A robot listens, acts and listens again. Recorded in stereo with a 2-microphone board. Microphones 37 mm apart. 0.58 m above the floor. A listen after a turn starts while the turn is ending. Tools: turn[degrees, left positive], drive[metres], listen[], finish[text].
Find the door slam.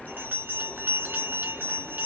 Action: listen[]
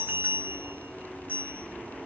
Action: listen[]
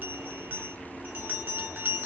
Action: finish[I can't make out a door slam, only a bell.]